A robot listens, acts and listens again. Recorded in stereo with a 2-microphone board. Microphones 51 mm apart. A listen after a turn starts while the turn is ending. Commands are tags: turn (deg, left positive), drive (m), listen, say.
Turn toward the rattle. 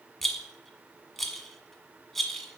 <turn deg="30"/>
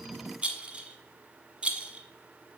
<turn deg="-20"/>
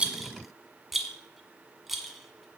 <say>Found it: a rattle, straight ahead.</say>